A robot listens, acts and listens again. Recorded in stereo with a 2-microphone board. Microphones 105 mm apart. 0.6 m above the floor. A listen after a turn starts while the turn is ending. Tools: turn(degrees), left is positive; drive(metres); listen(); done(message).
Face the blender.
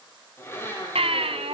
turn(degrees=25)
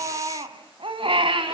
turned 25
listen()
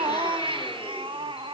listen()
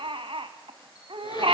done("I heard a blender, but can't make it out now. It was about straight ahead or 130° left.")